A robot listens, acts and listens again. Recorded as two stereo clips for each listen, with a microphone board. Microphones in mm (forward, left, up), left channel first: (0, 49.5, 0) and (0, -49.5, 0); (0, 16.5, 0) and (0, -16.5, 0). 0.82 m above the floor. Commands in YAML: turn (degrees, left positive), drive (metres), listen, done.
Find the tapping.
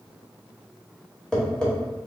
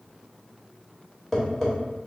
turn: 30
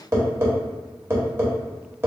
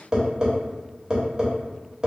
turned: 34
turn: -30
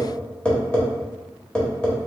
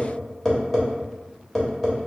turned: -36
turn: 10
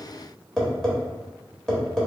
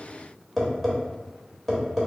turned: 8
done: "Found it: tapping, straight ahead."